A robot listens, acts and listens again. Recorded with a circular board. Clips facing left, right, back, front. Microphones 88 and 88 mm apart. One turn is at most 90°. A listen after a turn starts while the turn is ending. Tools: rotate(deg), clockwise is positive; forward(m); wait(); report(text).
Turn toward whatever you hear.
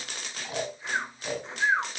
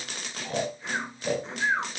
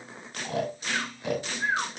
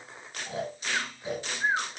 rotate(-90)
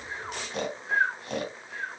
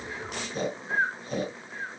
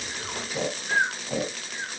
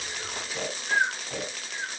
rotate(-90)
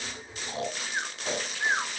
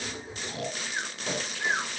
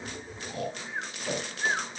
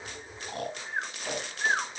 rotate(-30)
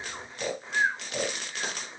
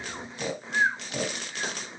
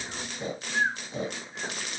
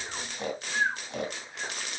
report("Facing the snoring, 2 to 4 m away.")